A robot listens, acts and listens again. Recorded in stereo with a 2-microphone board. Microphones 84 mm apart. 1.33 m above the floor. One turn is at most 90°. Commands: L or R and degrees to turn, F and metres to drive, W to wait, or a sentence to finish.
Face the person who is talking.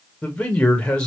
L30
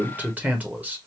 R20
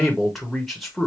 Found it: a man speaking, straight ahead.